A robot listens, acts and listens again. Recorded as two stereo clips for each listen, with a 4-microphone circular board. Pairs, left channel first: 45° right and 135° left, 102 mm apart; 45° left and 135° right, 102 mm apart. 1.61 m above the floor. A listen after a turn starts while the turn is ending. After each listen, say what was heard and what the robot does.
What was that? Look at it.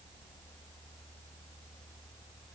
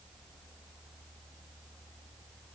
Keep listening.
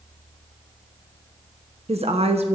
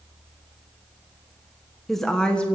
The woman speaking: 120° left. Turn 120° left.
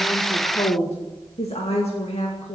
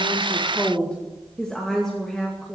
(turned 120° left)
The woman speaking is now 40° right. Turn 40° right.
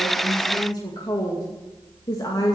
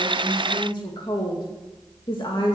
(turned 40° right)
Facing the woman speaking.